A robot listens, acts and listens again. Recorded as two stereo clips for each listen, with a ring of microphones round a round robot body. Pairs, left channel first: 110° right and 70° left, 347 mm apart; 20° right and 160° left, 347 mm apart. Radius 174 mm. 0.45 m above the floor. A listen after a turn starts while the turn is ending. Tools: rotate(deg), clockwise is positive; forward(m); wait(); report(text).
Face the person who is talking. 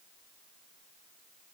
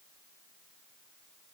wait()
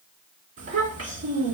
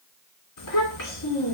rotate(-15)
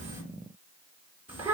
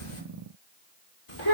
report("Found it: a child speaking, straight ahead.")